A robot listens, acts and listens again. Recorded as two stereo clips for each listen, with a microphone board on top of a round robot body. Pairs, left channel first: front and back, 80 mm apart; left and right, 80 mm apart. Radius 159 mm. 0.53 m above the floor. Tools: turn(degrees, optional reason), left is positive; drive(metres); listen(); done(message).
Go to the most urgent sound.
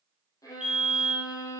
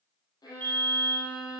turn(degrees=-110, reason="The fire alarm: 110° right.")
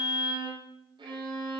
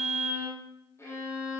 drive(metres=1.0)
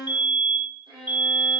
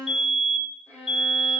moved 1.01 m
drive(metres=1.0)
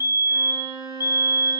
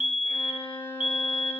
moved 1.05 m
turn(degrees=-10, reason="The fire alarm is now 10° right.")
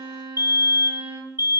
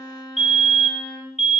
drive(metres=1.0)
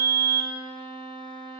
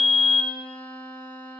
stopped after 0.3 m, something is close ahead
done("Arrived at the fire alarm, straight ahead.")